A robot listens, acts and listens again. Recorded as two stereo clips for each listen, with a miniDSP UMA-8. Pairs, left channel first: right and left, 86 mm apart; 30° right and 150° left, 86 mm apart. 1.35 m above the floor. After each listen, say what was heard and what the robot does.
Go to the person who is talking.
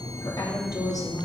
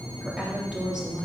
The woman speaking: 130° right. Turn 130° right.
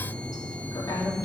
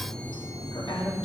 The woman speaking is now 50° right. Turn 50° right.
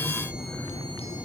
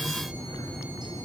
Keep listening.
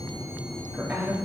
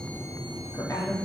The woman speaking is now 20° left. Turn 20° left.
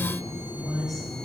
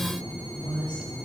Drive 1.0 m forward.
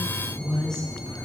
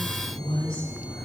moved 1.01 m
Drive 1.0 m forward.
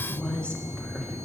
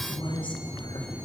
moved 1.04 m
The woman speaking is now 10° right. Turn 10° right.
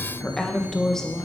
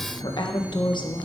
Drive 1.0 m forward.
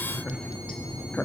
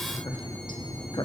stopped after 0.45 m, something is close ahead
The woman speaking is now 10° right. Turn 10° right.
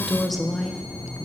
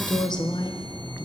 I am next to the woman speaking.